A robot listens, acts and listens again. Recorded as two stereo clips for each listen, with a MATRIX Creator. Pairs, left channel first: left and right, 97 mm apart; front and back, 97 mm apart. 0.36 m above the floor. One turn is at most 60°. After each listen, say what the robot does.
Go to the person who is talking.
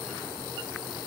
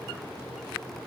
Keep listening.
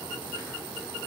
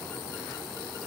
Keep listening.
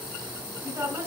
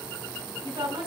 Turn 60° right.
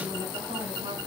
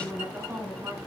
Turn 60° right.
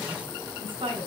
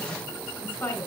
Turn 60° right.
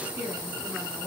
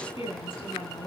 Turn 15° right.
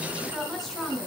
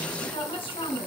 Drive 1.0 m forward.
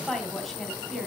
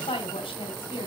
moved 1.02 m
Drive 1.0 m forward.
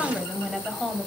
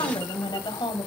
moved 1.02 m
Drive 1.0 m forward.
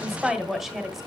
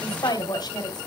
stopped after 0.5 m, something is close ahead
Arrived at the woman speaking, straight ahead.